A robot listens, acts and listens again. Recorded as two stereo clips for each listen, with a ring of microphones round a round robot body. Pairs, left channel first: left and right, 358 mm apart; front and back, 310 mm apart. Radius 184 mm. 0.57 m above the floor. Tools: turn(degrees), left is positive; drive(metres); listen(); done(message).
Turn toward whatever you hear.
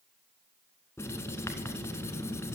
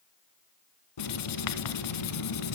done("Found it: writing, straight ahead, under 1 m away.")